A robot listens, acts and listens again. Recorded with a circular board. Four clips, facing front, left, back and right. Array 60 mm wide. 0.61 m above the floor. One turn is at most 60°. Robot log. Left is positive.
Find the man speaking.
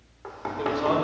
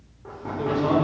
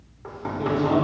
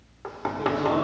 note: The man speaking: 15° left.
cmd yaw +15
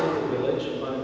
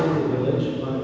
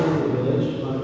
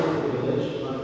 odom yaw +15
note: The man speaking is now 15° left.
cmd yaw +15
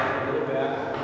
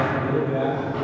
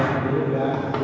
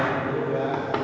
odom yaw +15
note: The man speaking is now 15° left.
cmd yaw +15
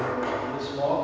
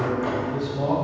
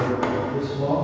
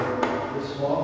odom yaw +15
note: The man speaking is now 20° left.
cmd yaw +20
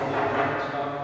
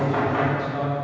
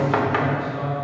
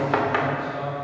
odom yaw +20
note: The man speaking is now 10° left.
cmd yaw +10
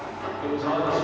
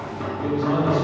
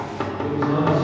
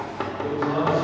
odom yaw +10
note: The man speaking is now 15° left.
cmd yaw +15
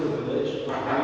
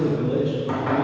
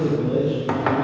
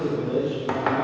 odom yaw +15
end: Facing the man speaking, 2 to 4 m away.